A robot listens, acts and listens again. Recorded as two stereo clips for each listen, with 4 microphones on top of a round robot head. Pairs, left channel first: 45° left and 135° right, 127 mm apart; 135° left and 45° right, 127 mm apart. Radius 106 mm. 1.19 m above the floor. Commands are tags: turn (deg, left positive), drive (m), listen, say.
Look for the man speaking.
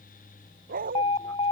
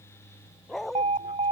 <listen/>
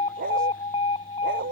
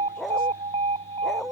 <listen/>
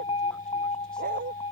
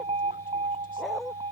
<say>I can't make out a man speaking to turn to.</say>